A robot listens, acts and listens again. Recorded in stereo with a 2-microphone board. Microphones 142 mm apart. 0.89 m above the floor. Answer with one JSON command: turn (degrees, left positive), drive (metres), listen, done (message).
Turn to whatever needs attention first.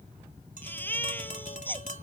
{"turn": 30}
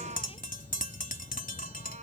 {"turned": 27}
{"listen": true}
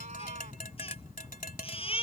{"turn": 140}
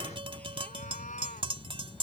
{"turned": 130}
{"turn": 10}
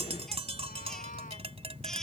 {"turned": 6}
{"listen": true}
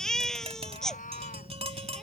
{"done": "Found it: a baby crying, straight ahead."}